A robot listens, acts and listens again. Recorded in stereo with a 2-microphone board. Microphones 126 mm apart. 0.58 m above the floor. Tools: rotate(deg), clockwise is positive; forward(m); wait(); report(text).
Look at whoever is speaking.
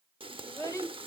rotate(-25)
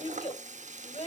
rotate(-130)
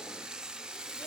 wait()
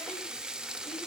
wait()
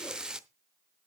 report("I heard a child speaking from this way, but can't make it out now.")